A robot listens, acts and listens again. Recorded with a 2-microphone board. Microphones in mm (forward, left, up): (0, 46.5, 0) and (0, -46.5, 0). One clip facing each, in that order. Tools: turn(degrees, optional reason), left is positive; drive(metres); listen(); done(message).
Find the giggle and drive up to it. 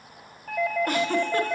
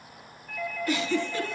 turn(degrees=55, reason="The giggle: about 55° left or 125° left.")
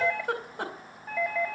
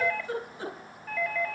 turn(degrees=70, reason="So it is at 70° left.")
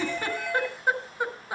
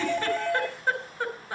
turn(degrees=15, reason="The giggle is now 15° left.")
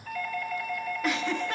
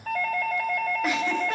listen()
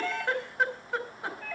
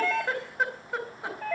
drive(metres=1.0)
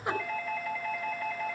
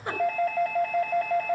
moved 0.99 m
drive(metres=1.0)
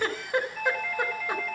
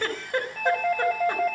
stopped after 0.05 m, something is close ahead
turn(degrees=10, reason="The giggle is now 10° left.")
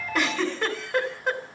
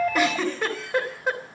done("Something is in my way. I am facing the giggle but have not reached it.")